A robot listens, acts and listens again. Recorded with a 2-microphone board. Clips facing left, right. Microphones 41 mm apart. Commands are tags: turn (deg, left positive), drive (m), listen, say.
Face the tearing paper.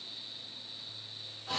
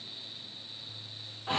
<listen/>
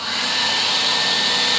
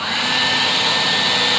<listen/>
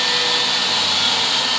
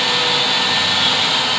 <say>I can't make out tearing paper, only a hair dryer.</say>